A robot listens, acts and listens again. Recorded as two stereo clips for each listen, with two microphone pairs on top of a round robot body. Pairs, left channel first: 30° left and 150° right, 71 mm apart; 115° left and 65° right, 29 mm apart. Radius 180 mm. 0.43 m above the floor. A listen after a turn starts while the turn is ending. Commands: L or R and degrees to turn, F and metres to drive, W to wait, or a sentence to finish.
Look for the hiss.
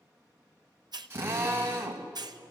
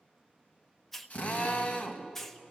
R165
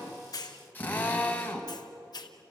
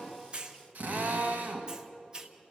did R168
Facing the hiss, 1 to 2 m away.